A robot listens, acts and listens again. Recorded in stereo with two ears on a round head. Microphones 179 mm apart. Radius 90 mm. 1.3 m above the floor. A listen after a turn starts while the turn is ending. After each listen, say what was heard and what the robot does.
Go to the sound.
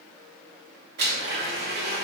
The blender: about 50° right or 130° right. Turn 50° right.
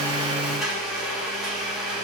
Drive 1.0 m forward.
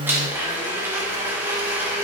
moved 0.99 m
The blender is now 10° right. Turn 10° right.
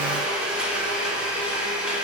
Drive 1.0 m forward.
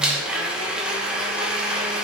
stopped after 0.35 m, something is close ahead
I am next to the blender.